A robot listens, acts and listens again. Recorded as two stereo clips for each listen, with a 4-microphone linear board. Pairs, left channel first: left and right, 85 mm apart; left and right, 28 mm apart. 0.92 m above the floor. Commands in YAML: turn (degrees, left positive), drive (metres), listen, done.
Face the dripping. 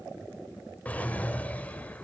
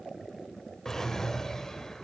listen: true
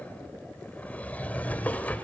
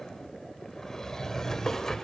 listen: true
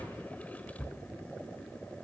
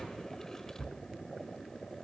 done: "I can't make out dripping, only a drawer."